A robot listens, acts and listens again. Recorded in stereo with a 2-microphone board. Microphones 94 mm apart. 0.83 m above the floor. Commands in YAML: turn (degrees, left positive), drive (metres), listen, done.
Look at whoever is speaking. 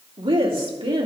turn: -65
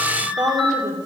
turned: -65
turn: -50
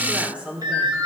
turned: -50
turn: -15
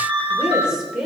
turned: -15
turn: -10
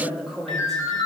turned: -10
done: "Found it: a woman speaking, straight ahead."